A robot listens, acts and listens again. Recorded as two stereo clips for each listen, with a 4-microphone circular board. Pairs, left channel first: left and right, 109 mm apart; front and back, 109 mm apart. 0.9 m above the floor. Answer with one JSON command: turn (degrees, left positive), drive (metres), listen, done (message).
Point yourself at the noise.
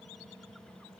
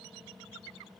{"listen": true}
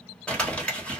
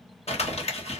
{"turn": 10}
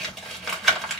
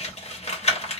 {"done": "Found it: crumpling, straight ahead."}